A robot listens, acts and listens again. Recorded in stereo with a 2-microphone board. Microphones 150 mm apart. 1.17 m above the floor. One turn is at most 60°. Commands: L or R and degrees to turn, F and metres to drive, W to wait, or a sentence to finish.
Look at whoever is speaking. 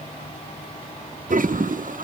W
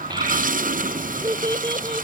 R30
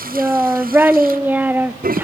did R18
R10
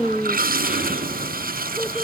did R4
Facing the child speaking.